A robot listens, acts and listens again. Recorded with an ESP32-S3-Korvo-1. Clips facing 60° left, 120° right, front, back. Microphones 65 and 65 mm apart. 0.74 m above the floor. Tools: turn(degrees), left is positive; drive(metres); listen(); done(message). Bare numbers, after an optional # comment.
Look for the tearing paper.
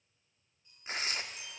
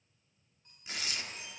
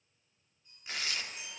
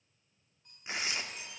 # The tearing paper: 115° left.
turn(115)
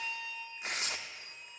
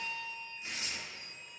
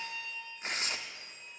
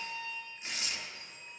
# The tearing paper is now 40° left.
turn(40)
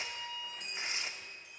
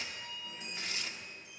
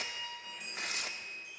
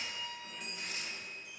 done("Facing the tearing paper, under 1 m away.")